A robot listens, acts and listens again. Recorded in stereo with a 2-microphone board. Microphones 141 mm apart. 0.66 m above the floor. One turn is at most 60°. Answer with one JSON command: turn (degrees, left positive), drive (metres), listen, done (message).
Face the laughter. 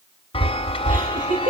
{"turn": -60}
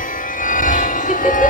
{"listen": true}
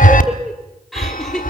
{"done": "Found it: laughter, straight ahead."}